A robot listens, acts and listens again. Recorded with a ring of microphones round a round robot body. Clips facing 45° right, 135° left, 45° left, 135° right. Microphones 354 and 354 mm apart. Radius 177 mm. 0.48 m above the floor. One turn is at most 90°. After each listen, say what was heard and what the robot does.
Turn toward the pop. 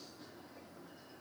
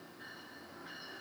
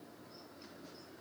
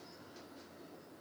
Keep listening.
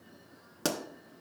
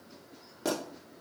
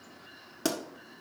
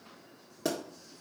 The pop: 15° right. Turn 15° right.
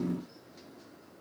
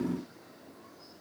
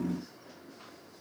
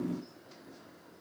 I heard a pop from this way, but can't make it out now.